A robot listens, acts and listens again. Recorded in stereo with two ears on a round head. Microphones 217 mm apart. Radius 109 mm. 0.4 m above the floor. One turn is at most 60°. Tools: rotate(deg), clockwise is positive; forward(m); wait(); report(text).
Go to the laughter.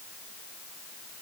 wait()
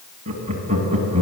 rotate(30)
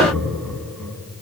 forward(1.0)
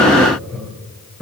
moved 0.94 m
forward(1.0)
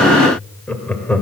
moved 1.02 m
rotate(-10)
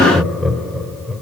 forward(1.0)
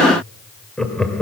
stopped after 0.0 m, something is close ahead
report("I am next to the laughter.")